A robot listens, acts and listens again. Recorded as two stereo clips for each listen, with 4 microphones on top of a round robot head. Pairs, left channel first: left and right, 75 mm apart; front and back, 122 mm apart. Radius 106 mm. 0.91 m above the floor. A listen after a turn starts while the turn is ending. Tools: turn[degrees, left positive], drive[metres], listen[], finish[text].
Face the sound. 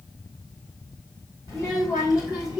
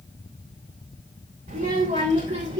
Thought: The child speaking: 145° right.
Action: turn[-145]
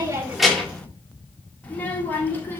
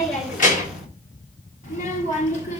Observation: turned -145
Thought: The child speaking is now 25° left.
Action: turn[25]
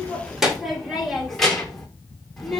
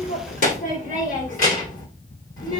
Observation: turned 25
Action: finish[Facing the child speaking, 2 to 4 m away.]